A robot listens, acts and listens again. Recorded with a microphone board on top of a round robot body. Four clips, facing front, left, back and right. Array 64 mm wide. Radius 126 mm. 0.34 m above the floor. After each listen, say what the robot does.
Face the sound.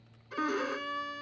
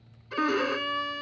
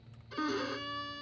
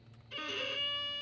Turn 80° left.
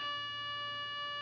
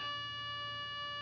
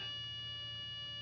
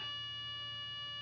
Turn 25° left.
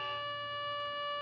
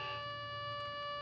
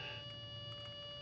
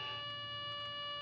Turn 10° left.
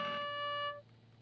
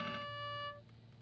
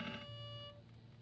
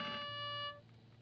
Facing the violin.